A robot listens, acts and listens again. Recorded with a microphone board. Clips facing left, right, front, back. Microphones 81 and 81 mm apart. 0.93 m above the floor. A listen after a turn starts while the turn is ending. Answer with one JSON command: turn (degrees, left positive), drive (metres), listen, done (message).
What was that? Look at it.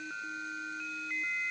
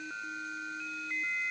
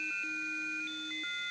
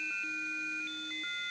{"listen": true}
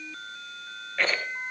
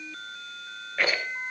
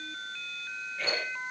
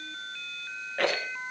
{"turn": -170}
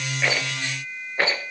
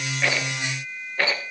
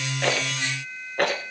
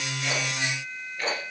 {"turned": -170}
{"turn": 20}
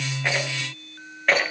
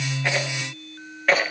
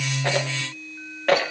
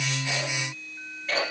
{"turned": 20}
{"done": "Found it: a rattle, straight ahead."}